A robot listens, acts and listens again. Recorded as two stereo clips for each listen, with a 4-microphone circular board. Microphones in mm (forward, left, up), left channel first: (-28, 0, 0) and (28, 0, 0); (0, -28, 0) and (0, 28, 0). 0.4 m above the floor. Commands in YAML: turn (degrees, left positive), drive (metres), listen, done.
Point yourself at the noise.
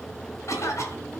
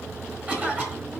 turn: 145
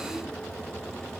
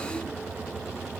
listen: true
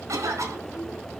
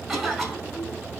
done: "Facing the cough, 2 to 4 m away."